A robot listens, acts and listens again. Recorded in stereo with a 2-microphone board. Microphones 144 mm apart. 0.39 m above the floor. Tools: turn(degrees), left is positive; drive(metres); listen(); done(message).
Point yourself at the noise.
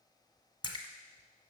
turn(degrees=35)
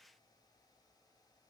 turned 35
listen()
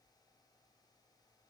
done("I heard a splash, but can't make it out now. It was about straight ahead or 110° left.")